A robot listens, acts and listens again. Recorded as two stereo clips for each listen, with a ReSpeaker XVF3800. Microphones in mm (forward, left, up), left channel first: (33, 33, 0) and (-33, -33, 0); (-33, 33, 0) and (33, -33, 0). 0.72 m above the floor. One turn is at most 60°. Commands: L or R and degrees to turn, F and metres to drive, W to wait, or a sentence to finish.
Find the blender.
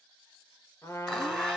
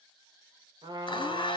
L60
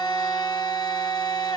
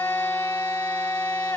L60
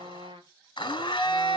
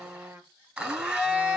L35
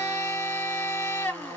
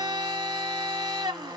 R15
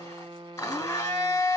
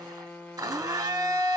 Found it: a blender, straight ahead, 1 to 2 m away.